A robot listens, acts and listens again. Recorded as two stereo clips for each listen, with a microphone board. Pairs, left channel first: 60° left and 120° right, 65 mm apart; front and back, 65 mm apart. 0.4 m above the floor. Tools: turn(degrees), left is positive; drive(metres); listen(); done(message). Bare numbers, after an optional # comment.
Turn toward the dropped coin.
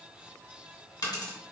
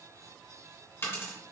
# The dropped coin: 50° left.
turn(50)
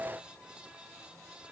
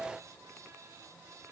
done("Facing where the dropped coin came from. I can't hear it now.")